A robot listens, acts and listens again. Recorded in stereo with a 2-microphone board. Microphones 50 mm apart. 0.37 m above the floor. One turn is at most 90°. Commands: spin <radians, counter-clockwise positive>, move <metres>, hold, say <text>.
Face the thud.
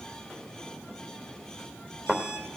spin 0.52
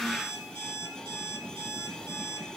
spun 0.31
hold
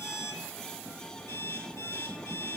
say I heard a thud, but can't make it out now. It was about 10° right or 155° left.